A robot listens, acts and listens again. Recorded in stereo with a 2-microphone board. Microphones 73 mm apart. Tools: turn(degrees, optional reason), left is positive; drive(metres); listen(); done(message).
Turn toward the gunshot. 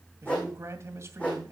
listen()
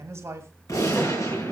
turn(degrees=50, reason="The gunshot: about 50° left or 130° left.")
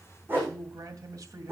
listen()
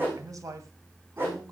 done("I heard a gunshot, but can't make it out now. It was about straight ahead or 80° left.")